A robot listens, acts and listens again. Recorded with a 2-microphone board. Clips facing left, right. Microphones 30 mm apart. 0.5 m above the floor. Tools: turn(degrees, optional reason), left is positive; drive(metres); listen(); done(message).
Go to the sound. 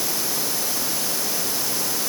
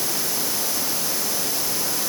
listen()
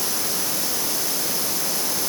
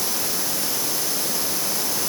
listen()
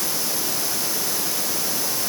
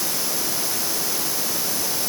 done("I can't make out anything.")